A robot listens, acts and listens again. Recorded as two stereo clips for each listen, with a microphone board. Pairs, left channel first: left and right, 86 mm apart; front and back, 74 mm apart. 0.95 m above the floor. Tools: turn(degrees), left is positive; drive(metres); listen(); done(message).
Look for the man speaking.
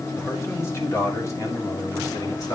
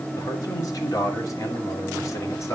turn(degrees=45)
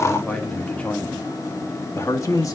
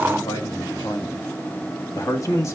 turn(degrees=45)
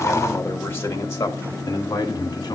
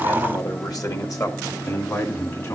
turn(degrees=45)
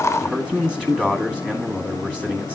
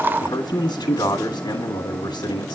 turn(degrees=-10)
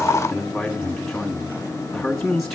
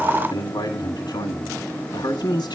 done("Facing the man speaking, 1 to 2 m away.")